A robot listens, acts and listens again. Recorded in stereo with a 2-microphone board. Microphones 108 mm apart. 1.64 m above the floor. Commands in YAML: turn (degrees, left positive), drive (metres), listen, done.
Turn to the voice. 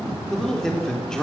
turn: 30
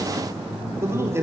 turn: -25
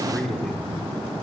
done: "Found it: a man speaking, straight ahead, over 4 m away."